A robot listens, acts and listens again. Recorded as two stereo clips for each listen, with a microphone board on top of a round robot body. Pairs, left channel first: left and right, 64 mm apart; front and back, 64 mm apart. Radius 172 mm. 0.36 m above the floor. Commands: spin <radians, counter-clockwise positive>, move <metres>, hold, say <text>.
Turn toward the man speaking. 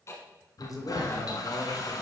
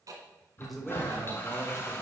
spin 1.57
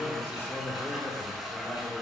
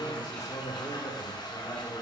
spin 0.52
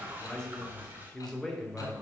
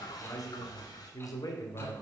spin 0.17
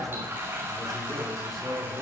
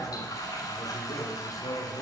say Found it: a man speaking, straight ahead, 2 to 4 m away.